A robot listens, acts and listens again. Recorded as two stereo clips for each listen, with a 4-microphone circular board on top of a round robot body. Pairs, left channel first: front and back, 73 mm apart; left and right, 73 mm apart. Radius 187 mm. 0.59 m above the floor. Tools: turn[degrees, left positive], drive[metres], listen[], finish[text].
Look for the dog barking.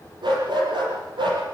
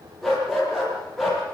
Thought: The dog barking: straight behind.
Action: turn[180]
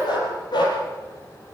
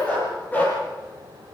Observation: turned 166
Thought: The dog barking is now 20° left.
Action: turn[20]
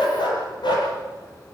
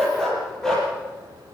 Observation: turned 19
Thought: The dog barking is now 10° left.
Action: turn[10]
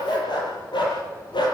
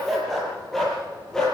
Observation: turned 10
Thought: The dog barking is now 10° left.
Action: turn[10]
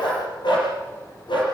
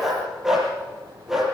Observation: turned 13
Action: finish[Found it: a dog barking, straight ahead.]